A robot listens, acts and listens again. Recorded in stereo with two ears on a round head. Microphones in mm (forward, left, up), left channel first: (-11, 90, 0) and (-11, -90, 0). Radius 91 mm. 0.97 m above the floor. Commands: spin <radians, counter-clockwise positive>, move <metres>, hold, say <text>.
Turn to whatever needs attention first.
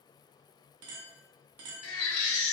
spin 1.57
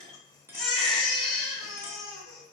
say Found it: a baby crying, straight ahead.